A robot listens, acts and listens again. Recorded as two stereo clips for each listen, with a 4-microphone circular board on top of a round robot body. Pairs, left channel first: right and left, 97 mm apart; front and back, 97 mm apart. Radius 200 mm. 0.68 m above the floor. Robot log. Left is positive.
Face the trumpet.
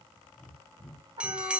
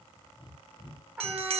note: The trumpet: 110° left.
cmd yaw +110
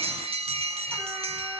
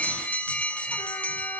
cmd idle
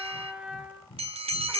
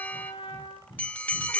note: The trumpet is now 15° left.
cmd yaw +15
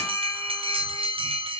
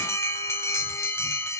cmd idle
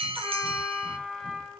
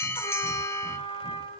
end: Facing the trumpet, 2 to 4 m away.